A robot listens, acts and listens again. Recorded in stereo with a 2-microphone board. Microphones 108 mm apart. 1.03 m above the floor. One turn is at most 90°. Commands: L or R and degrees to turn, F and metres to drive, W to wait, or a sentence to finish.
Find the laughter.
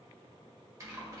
W
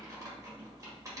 W
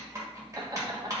R40
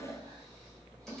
W
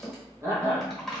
R20
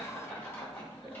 Found it: laughter, straight ahead.